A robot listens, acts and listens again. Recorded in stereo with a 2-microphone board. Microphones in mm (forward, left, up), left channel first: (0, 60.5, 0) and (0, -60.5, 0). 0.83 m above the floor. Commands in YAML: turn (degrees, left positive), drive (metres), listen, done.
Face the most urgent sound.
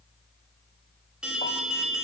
turn: -30
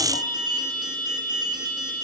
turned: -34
turn: -140
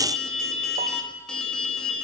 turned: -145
done: "Facing the alarm, 2 to 4 m away."